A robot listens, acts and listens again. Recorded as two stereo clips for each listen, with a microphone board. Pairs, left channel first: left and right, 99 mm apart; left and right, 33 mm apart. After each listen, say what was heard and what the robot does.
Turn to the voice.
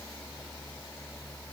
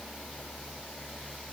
Keep listening.
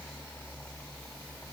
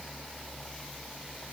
Keep listening.
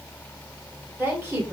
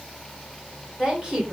The woman speaking: about 20° right or 160° right. Turn 20° right.
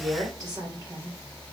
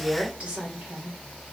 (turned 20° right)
So it is at 140° right. Turn 140° right.
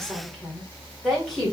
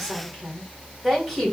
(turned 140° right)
Facing the woman speaking, 1 to 2 m away.